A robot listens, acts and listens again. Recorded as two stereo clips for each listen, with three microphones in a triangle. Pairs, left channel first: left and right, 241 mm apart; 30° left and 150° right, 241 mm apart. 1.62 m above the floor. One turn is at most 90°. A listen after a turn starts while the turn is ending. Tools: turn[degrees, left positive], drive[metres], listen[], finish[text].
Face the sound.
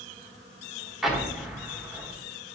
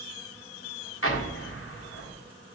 Action: finish[Found it: an explosion, straight ahead.]